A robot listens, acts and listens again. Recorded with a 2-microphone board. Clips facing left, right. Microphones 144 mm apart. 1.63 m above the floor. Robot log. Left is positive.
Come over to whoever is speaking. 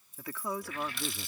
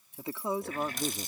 note: The woman speaking: about 25° right or 155° right.
cmd yaw -25
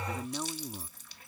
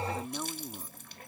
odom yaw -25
cmd fwd 1.0
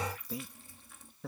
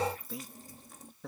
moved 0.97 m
cmd fwd 1.0
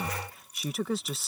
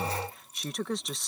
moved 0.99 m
cmd fwd 1.0
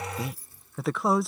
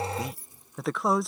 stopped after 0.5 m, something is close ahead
end: Arrived at the woman speaking, straight ahead.